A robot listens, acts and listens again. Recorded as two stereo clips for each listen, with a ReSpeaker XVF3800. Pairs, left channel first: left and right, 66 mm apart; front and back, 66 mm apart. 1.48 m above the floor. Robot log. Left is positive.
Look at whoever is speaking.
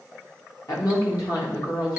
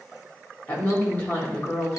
note: The woman speaking: 65° left.
cmd yaw +65
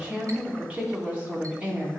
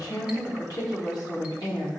note: The woman speaking is now 25° right.
cmd yaw -25
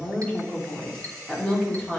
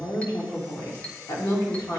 note: The woman speaking is now 15° left.
cmd yaw +15
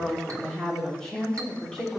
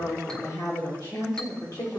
note: The woman speaking is now 10° left.
cmd yaw +10
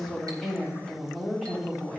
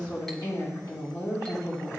end: Facing the woman speaking, 2 to 4 m away.